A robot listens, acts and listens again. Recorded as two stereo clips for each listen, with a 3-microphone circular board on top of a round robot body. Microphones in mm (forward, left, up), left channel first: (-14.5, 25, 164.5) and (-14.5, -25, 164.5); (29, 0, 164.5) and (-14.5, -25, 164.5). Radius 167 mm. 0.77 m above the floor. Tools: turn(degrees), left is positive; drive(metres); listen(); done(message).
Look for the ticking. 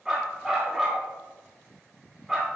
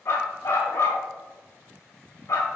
listen()
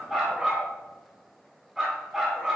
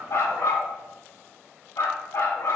listen()
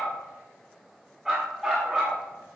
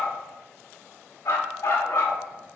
done("I can't make out ticking, only a dog barking.")